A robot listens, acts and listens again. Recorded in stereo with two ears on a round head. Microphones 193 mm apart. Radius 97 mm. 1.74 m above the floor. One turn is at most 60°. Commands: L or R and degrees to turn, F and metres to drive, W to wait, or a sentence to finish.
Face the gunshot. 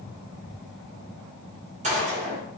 R35
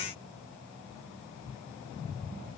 W
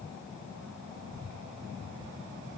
I heard a gunshot, but can't make it out now. It was about straight ahead or 110° right.